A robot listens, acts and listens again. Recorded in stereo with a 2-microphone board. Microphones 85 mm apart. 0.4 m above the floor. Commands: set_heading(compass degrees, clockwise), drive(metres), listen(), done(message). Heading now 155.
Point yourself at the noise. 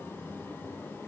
listen()
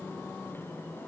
listen()
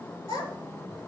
set_heading(65)
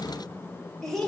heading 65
done("Found it: a child speaking, straight ahead.")